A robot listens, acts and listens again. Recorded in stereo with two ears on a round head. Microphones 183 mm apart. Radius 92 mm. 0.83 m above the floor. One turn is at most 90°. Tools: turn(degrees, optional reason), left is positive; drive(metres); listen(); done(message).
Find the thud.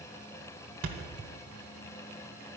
turn(degrees=-75, reason="The thud: about 75° right or 105° right.")
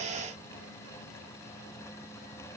listen()
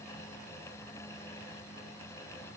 done("I heard a thud, but can't make it out now. It was about straight ahead or 30° right.")